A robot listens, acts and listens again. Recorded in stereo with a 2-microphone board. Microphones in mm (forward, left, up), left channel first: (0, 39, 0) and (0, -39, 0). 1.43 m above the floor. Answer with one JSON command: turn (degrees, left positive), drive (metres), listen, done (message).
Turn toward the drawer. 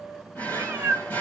{"turn": 20}
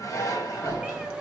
{"turn": 140}
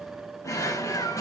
{"turn": 50}
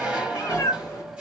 {"turn": -10}
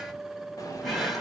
{"done": "Found it: a drawer, straight ahead, 1 to 2 m away."}